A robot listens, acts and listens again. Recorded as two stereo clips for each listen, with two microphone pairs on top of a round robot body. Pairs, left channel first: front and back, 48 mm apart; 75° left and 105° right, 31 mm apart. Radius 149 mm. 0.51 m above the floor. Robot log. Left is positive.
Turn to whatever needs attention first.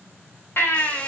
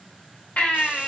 note: The baby crying: 40° left.
cmd yaw +40
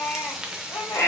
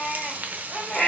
end: Found it: a baby crying, straight ahead, 2 to 4 m away.